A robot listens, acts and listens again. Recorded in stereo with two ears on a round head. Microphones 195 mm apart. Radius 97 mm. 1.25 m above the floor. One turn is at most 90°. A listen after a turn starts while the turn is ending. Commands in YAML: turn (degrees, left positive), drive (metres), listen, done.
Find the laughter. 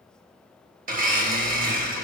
listen: true
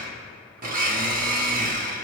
listen: true
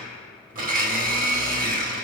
done: "I can't make out laughter to turn to."